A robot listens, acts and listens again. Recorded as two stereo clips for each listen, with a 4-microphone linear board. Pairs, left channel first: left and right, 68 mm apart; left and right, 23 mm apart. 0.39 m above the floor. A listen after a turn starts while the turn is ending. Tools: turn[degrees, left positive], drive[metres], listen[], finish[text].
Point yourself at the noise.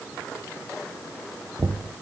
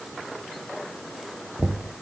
Action: turn[-90]
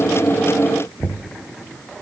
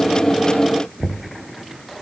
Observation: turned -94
Thought: So it is at 15° left.
Action: turn[15]
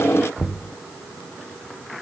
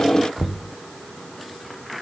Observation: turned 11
Action: finish[Found it: knocking, straight ahead.]